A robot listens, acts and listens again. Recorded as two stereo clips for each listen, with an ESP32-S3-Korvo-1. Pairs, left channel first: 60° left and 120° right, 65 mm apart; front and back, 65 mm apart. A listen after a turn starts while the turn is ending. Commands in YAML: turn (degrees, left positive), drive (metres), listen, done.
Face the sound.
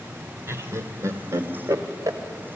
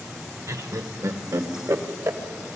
turn: -145
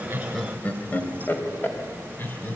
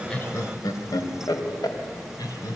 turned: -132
done: "Facing the laughter, 2 to 4 m away."